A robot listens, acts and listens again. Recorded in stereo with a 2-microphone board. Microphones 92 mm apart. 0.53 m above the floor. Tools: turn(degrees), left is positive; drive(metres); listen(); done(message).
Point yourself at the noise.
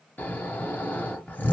turn(degrees=20)
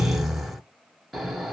done("Found it: snoring, straight ahead.")